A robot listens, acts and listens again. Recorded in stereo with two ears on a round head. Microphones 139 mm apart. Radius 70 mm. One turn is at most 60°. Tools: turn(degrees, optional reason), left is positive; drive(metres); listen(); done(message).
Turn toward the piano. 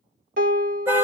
turn(degrees=-60, reason="The piano: about 60° right or 120° right.")
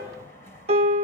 turn(degrees=-45, reason="So it is at 45° right.")
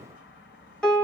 done("Facing the piano, under 1 m away.")